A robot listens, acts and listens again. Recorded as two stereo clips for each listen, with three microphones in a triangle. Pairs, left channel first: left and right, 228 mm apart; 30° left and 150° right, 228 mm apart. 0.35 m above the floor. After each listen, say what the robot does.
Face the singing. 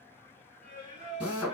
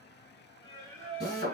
Turn 145° right.
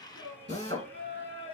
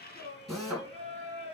Turn 30° right.
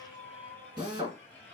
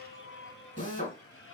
Found it: singing, straight ahead.